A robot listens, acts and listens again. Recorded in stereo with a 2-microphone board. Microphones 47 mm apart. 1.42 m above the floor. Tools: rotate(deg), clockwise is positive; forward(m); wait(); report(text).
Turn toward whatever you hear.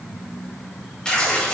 rotate(-30)
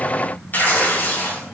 rotate(-135)
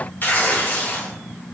rotate(-45)
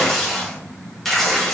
report("Facing the tearing paper, 2 to 4 m away.")